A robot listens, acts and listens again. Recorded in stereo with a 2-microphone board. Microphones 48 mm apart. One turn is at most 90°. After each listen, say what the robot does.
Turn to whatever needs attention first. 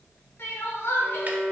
Turn 50° left.
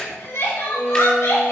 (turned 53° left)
Turn 75° left.
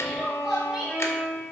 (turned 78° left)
Found it: crying, straight ahead.